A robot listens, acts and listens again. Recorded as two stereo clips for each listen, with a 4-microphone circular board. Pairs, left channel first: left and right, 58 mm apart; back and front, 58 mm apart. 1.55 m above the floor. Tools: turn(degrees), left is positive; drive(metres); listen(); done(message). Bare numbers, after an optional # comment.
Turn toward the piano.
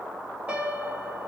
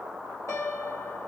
# The piano: 160° right.
turn(-160)
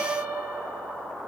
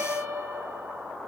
# The piano is now 30° right.
turn(-30)
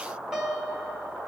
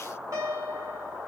# The piano is now 10° right.
turn(-10)
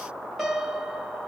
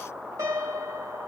done("Found it: a piano, straight ahead.")